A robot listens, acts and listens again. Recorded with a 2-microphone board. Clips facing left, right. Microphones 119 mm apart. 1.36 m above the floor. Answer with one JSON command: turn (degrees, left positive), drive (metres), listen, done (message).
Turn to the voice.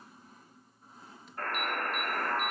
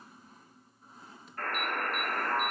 {"listen": true}
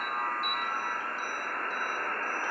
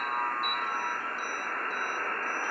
{"listen": true}
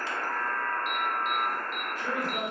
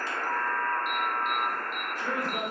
{"turn": -40}
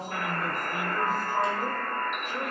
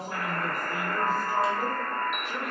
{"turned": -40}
{"turn": -100}
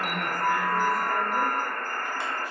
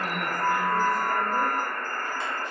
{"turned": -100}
{"listen": true}
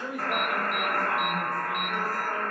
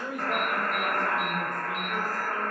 {"done": "Facing the man speaking, 1 to 2 m away."}